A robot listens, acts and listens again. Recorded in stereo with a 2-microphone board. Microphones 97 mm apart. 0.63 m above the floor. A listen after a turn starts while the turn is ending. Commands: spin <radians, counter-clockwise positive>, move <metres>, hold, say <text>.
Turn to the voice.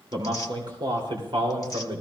spin -1.13
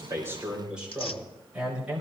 spin -0.26
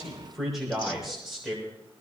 say Facing the man speaking.